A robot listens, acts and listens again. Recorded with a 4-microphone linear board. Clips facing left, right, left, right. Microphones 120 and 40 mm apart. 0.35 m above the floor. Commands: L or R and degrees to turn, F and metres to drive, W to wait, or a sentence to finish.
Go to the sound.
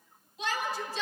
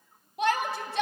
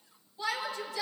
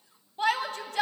R55
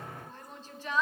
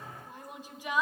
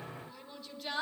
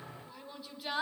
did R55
R15
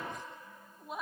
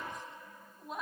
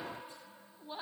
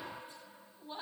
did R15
F1.0
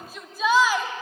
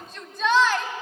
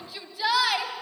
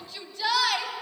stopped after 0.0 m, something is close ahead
Blocked. The shout is further on, straight ahead.